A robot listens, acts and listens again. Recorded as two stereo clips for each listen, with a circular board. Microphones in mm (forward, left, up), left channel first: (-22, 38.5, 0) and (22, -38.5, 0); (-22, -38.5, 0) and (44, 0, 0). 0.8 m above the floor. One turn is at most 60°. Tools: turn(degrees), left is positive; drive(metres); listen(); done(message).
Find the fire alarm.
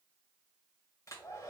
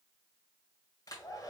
listen()
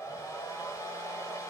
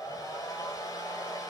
listen()
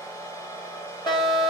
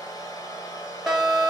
turn(degrees=60)
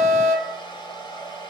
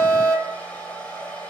turn(degrees=60)
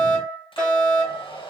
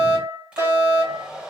turn(degrees=50)
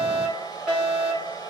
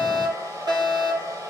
turn(degrees=15)
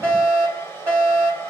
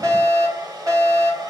done("Found it: a fire alarm, straight ahead, 2 to 4 m away.")